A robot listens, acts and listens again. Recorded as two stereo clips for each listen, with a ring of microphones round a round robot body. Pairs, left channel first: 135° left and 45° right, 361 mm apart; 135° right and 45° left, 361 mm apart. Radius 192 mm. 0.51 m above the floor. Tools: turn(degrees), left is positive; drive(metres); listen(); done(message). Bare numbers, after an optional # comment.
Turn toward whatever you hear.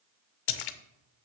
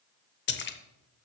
# The splash: 160° left.
turn(160)
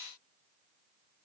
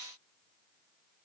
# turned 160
done("Facing where the splash came from. I can't hear it now.")